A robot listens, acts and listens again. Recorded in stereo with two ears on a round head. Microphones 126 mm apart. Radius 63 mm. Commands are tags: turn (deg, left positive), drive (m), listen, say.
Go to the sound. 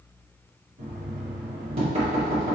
<turn deg="-45"/>
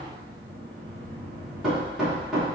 <drive m="1.0"/>
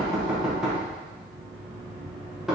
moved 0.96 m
<drive m="1.0"/>
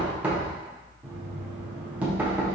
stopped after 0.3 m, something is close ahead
<turn deg="-10"/>
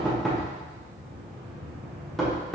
<say>I am next to the knocking.</say>